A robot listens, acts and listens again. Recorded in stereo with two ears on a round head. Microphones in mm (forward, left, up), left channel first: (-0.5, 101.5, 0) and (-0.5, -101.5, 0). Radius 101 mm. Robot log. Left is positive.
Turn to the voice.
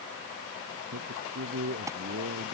note: The man speaking: about 50° right or 130° right.
cmd yaw -50
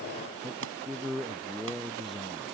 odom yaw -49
end: Facing the man speaking.